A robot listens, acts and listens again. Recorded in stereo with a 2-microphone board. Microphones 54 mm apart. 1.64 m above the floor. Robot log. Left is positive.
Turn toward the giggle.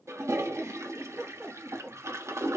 note: The giggle: about 55° right or 125° right.
cmd yaw -55
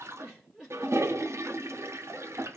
end: Facing the giggle, 2 to 4 m away.